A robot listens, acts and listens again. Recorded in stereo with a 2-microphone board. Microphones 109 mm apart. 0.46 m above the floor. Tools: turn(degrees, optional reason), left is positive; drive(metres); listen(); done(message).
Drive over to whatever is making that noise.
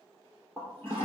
turn(degrees=20, reason="The toilet flushing: about 20° left or 160° left.")
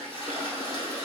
turn(degrees=140, reason="So it is at 140° left.")
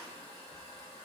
turn(degrees=25, reason="The toilet flushing is now 25° left.")
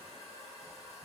drive(metres=1.0)
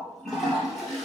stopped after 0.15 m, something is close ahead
done("Blocked. The toilet flushing is further on, straight ahead.")